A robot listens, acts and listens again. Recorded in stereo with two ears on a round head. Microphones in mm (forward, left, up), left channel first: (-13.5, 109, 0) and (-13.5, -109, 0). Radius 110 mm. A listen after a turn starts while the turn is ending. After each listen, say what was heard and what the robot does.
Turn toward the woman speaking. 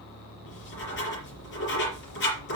Keep listening.
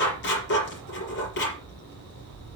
Keep listening.
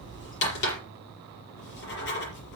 I can't make out a woman speaking, only writing.